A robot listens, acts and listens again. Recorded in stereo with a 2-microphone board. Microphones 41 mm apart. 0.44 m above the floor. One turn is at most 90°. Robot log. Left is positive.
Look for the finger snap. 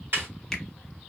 cmd yaw +30
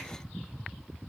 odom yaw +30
cmd idle
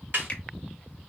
note: So it is at 145° left.
cmd yaw +90
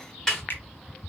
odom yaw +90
note: The finger snap is now 70° left.
cmd yaw +70
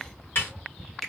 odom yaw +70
end: Facing the finger snap, 1 to 2 m away.